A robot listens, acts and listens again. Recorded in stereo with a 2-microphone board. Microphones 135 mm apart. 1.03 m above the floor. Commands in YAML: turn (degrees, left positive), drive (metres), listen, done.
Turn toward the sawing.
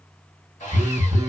turn: 60
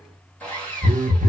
turn: 10
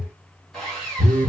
done: "Found it: sawing, straight ahead."